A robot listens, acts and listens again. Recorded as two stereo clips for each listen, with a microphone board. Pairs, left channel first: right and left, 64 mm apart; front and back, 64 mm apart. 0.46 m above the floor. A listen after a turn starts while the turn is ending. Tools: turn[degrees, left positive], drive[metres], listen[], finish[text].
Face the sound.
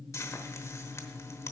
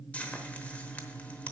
Thought: The frying: 65° right.
Action: turn[-65]
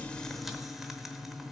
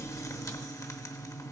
Action: listen[]
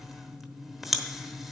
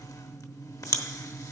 Action: finish[Found it: frying, straight ahead.]